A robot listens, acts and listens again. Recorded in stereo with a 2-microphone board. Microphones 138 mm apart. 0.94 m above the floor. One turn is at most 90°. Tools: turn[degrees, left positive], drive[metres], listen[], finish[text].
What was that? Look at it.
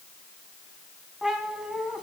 Action: turn[-30]
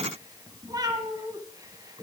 Thought: So it is at 145° right.
Action: turn[-90]
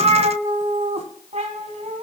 Thought: The cat meowing is now 60° right.
Action: turn[-60]
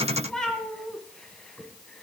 Action: finish[Found it: a cat meowing, straight ahead.]